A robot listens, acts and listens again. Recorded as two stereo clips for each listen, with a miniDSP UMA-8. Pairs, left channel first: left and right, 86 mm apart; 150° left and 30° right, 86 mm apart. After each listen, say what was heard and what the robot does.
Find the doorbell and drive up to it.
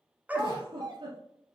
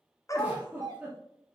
The doorbell: 65° right. Turn 65° right.
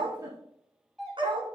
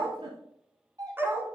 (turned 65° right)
Drive 1.0 m forward.
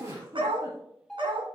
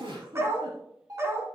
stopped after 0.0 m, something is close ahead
Blocked. The doorbell is further on, straight ahead.